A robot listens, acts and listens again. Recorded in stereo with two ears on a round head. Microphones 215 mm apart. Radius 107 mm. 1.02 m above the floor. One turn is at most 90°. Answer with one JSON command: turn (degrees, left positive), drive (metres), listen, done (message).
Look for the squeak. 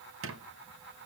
{"turn": -55}
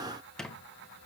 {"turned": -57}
{"done": "Facing the squeak, under 1 m away."}